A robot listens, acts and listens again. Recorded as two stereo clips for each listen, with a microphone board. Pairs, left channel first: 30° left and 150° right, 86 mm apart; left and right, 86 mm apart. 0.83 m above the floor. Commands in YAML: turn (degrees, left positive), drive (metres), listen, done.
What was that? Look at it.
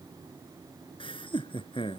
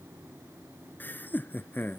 turn: 20
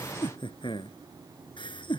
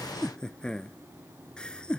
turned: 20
turn: 10
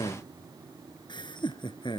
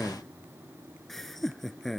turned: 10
done: "Facing the laughter."